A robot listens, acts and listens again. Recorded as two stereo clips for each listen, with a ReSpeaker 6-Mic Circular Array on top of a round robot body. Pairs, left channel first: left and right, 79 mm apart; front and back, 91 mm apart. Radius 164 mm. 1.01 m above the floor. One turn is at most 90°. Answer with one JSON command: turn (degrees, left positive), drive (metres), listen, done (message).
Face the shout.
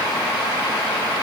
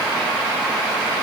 {"listen": true}
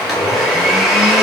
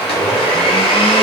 {"listen": true}
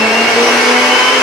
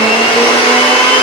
{"done": "I can't make out a shout to turn to."}